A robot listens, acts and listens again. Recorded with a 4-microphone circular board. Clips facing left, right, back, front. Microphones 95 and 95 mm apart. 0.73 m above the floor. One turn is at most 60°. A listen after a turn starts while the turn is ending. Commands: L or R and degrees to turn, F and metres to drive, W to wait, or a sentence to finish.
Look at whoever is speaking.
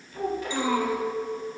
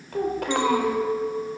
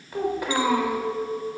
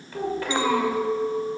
R60
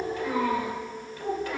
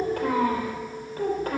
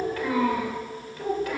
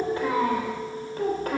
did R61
R45
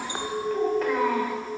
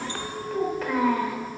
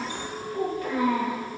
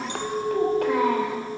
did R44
Facing the child speaking.